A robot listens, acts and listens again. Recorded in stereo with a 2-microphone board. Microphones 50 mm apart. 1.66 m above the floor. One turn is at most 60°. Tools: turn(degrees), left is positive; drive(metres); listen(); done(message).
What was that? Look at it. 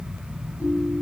turn(degrees=60)
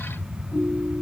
turn(degrees=55)
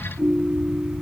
done("Found it: a ringtone, straight ahead.")